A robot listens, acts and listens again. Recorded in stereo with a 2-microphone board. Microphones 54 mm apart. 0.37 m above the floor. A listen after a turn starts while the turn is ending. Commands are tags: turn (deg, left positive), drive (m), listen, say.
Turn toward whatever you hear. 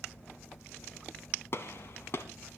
<turn deg="50"/>
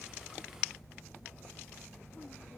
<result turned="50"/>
<listen/>
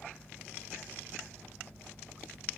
<say>I heard a gunshot, but can't make it out now. It was about straight ahead or 80° left.</say>